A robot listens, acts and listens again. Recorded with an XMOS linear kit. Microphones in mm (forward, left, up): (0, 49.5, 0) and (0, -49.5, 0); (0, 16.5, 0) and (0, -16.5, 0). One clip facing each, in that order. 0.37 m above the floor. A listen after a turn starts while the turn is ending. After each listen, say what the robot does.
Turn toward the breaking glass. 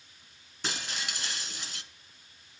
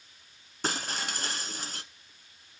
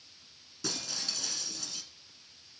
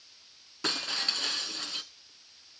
Turn 45° right.
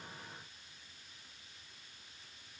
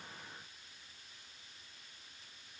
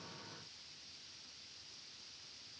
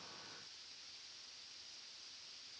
Keep listening.
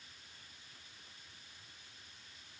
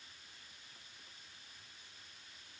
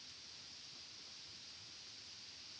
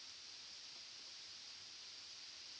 I heard breaking glass, but can't make it out now. It was about straight ahead or 90° right.